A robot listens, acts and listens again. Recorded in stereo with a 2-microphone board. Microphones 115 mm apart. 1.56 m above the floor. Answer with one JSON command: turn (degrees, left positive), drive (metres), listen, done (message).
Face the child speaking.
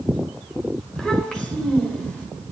{"turn": 30}
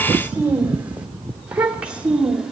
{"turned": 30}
{"done": "Facing the child speaking."}